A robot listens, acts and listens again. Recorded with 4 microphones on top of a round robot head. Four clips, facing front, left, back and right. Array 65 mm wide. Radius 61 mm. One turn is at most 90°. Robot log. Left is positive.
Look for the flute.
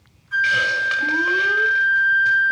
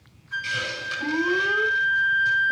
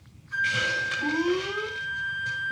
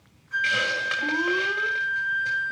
end: Facing the flute.